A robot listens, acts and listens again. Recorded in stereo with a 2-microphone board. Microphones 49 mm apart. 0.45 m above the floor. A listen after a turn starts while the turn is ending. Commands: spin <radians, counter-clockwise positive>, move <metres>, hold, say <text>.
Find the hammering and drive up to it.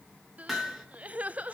spin 0.52
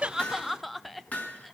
spin 2.62
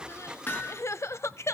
spin 0.79
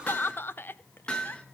spin 0.35
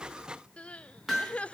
move 1.0
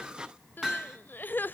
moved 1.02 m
spin -0.17
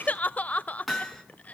move 1.0
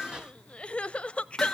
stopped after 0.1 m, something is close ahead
say Something is in my way. I am facing the hammering but have not reached it.